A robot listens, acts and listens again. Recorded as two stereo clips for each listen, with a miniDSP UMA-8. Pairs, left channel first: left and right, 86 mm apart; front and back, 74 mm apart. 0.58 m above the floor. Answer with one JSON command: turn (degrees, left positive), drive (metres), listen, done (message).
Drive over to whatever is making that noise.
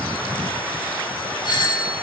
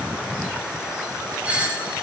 {"turn": 110}
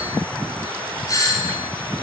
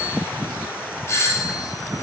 {"turn": 45}
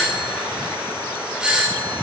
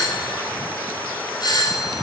{"turn": -10}
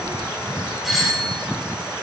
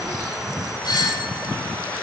{"drive": 1.0}
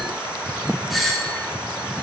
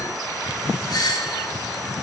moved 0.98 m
{"drive": 1.0}
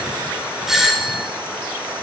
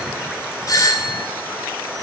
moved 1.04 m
{"drive": 1.0}
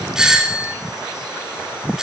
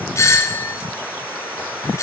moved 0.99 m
{"turn": -10}
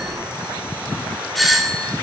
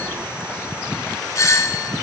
{"drive": 1.0}
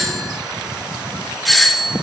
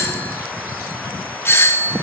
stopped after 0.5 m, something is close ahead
{"done": "Arrived at the doorbell, straight ahead."}